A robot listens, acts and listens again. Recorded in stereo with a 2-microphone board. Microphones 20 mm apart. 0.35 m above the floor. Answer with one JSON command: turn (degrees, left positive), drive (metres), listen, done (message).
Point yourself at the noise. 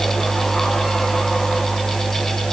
{"listen": true}
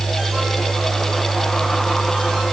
{"listen": true}
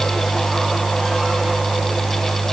{"done": "I can't make out anything to turn to."}